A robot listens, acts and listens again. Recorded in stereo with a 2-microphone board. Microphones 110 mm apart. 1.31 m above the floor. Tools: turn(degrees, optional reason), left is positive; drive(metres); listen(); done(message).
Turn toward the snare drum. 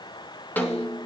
turn(degrees=15, reason="The snare drum: about 15° left or 165° left.")
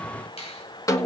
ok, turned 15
turn(degrees=150, reason="So it is at 150° left.")
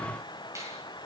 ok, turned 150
listen()
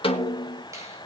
turn(degrees=55, reason="The snare drum is now 55° left.")
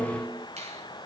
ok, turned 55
done("Facing the snare drum, 1 to 2 m away.")